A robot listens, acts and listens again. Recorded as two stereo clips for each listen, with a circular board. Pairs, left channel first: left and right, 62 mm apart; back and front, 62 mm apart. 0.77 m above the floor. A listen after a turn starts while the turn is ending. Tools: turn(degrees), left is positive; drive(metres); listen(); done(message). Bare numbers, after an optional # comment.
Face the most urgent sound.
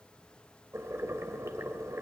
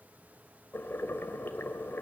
listen()
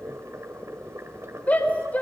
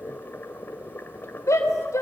# The shout: 155° left.
turn(155)
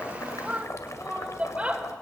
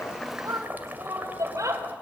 # The shout is now 20° right.
turn(-20)
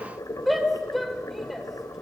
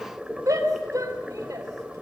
done("Found it: a shout, straight ahead.")